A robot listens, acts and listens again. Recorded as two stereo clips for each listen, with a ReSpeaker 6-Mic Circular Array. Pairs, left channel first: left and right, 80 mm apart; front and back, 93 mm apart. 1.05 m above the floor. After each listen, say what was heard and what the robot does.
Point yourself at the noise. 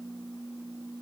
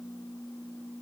Keep listening.
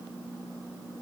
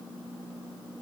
Keep listening.
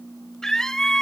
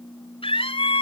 Found it: a scream, straight ahead.